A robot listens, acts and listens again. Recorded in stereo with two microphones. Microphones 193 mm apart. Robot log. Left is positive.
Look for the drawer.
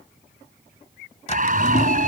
note: The drawer: about 40° left or 140° left.
cmd yaw +40
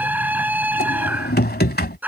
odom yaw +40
note: So it is at 95° left.
cmd yaw +95
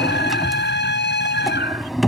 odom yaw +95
end: Facing the drawer.